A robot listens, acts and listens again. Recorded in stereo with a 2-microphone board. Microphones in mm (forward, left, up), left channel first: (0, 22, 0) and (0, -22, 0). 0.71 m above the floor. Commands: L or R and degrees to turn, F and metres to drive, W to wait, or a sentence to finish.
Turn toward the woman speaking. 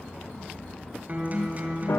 W
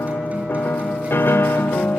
W
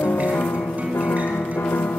I can't make out a woman speaking, only a piano and a guitar.